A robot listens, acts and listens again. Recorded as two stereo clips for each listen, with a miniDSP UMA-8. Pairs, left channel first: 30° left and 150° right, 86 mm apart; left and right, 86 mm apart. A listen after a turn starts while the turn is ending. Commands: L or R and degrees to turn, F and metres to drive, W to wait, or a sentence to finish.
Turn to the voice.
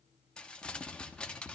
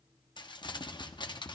W
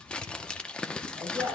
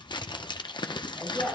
R165
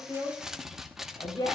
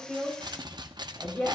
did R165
L20
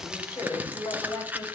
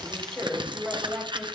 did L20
Found it: a woman speaking, straight ahead.